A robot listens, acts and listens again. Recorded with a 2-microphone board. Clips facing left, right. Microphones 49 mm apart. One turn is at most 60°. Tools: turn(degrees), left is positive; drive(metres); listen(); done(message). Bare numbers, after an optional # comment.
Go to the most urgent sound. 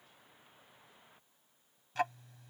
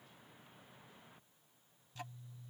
listen()
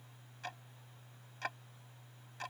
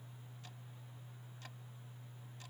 listen()
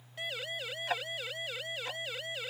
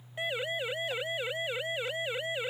# The siren: about 25° right or 155° right.
turn(-25)
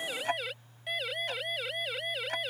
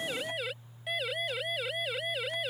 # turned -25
drive(1.0)
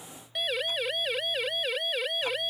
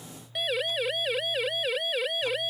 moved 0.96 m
drive(1.0)
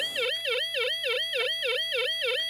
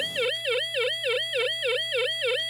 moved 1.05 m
# The siren is now 10° right.
turn(-10)
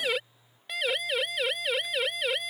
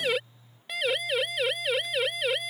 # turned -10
drive(1.0)
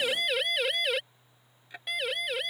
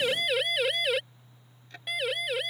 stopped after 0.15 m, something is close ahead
done("I am next to the siren.")